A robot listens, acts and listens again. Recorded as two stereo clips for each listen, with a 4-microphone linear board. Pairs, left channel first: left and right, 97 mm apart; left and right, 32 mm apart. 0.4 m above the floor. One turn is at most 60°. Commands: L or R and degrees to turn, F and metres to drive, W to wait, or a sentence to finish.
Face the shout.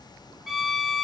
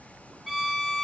W
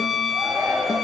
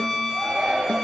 R25
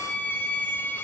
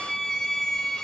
W
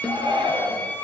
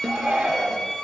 R60
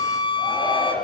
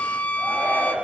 R60
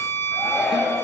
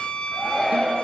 Facing the shout.